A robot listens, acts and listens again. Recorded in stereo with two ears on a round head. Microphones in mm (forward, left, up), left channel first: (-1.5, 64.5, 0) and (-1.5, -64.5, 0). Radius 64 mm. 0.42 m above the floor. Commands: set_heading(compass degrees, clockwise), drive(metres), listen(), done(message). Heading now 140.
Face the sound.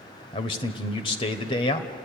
set_heading(100)
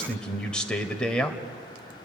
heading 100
set_heading(90)
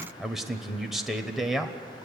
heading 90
done("Found it: a man speaking, straight ahead.")